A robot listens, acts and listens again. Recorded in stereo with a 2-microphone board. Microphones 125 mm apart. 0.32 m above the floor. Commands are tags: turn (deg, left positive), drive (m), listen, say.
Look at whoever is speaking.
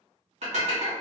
<listen/>
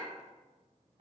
<listen/>
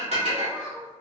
<turn deg="-30"/>
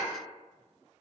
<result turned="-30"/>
<listen/>
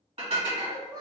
<turn deg="-145"/>
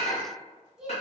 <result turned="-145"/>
<say>Found it: a child speaking, straight ahead.</say>